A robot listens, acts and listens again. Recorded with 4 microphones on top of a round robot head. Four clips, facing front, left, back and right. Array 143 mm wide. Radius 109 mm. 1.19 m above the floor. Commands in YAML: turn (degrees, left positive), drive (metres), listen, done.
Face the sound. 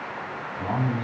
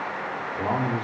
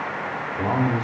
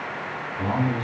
turn: 145
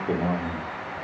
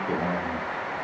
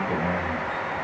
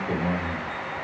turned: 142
done: "Found it: a man speaking, straight ahead."